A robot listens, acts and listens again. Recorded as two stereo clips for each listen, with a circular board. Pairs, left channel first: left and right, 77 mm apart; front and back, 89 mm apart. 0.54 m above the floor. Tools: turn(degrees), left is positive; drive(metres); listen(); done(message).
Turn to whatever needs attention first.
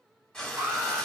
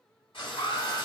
turn(degrees=-30)
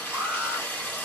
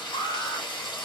turn(degrees=-15)
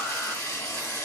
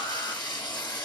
listen()
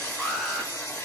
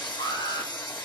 done("Found it: an alarm, straight ahead.")